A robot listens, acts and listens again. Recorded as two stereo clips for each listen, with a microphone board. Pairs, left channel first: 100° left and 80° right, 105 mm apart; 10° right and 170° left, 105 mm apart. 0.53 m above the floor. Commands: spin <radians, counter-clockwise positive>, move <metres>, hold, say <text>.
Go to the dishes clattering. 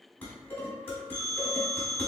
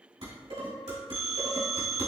spin 2.97
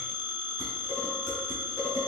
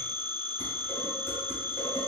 spin 0.79
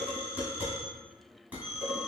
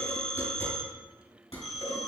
move 1.0
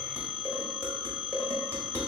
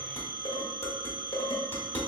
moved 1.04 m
spin -0.26
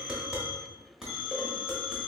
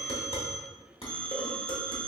move 1.0
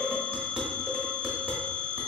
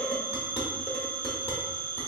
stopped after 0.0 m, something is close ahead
say I am next to the dishes clattering.